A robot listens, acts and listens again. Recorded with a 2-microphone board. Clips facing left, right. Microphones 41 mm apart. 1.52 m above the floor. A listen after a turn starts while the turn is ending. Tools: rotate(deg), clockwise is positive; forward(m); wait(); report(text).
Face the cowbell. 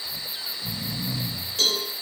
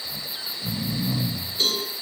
rotate(-90)
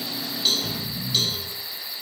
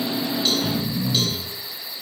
wait()
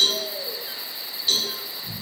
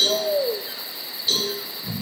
report("Facing the cowbell, over 4 m away.")